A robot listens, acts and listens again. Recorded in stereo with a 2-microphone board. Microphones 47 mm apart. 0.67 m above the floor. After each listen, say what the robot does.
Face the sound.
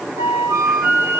Turn 65° right.
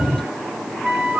Turn 40° right.
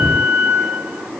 Turn 10° left.
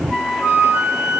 Facing the flute, 1 to 2 m away.